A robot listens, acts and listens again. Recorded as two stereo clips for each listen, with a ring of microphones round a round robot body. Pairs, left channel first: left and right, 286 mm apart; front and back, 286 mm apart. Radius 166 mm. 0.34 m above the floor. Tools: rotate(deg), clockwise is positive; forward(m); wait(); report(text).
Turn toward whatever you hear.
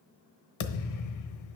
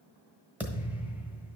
rotate(-95)
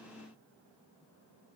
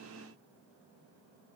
report("Facing where the thud came from. I can't hear it now.")